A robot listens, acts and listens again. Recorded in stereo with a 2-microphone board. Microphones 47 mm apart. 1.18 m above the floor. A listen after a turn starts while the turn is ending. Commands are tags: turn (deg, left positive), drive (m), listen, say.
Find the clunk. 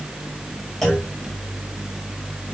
<turn deg="30"/>
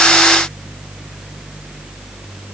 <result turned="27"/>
<listen/>
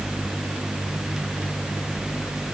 <say>I heard a clunk, but can't make it out now. It was about 25° right or 150° left.</say>